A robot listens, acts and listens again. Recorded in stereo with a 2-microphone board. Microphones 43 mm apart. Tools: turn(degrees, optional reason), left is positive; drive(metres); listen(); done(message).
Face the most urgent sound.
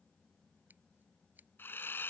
listen()
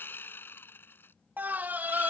turn(degrees=-45, reason="The scream: about 45° right or 135° right.")
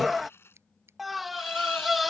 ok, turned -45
done("Found it: a scream, straight ahead.")